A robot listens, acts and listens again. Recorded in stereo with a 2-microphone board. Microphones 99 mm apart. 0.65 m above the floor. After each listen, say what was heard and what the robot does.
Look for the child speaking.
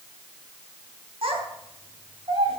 Turn 90° right.
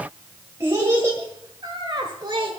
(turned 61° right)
So it is at 50° right. Turn 50° right.
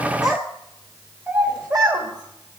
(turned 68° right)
The child speaking is now 15° right. Turn 15° right.
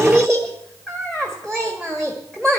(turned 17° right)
Found it: a child speaking, straight ahead, 1 to 2 m away.